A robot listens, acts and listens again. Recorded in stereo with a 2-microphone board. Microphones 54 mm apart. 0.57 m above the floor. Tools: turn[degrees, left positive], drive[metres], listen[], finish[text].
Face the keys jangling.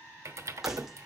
Action: turn[-30]
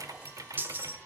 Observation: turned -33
Thought: So it is at 140° right.
Action: turn[-140]
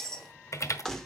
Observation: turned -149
Thought: The keys jangling is now 10° left.
Action: turn[10]
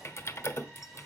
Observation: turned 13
Action: listen[]
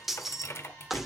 Action: finish[Found it: keys jangling, straight ahead.]